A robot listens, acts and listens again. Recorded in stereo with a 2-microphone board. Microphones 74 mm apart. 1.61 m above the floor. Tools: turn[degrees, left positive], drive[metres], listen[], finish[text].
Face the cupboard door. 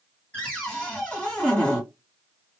Thought: The cupboard door: about 15° left or 165° left.
Action: turn[15]
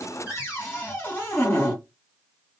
Thought: So it is at 150° left.
Action: turn[150]
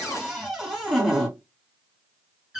Action: finish[Facing the cupboard door.]